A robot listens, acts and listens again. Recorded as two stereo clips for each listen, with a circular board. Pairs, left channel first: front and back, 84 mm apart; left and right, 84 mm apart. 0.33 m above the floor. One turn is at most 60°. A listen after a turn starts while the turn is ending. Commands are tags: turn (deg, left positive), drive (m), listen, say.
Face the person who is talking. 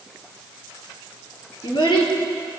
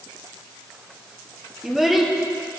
<say>Found it: a child speaking, straight ahead.</say>